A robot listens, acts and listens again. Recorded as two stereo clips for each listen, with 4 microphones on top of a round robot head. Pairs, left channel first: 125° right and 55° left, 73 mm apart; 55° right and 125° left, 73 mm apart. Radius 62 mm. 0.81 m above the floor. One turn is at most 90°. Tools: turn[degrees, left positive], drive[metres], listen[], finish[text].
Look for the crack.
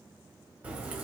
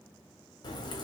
Thought: The crack: 20° right.
Action: turn[-20]
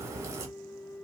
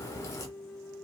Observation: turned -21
Action: finish[Facing the crack, under 1 m away.]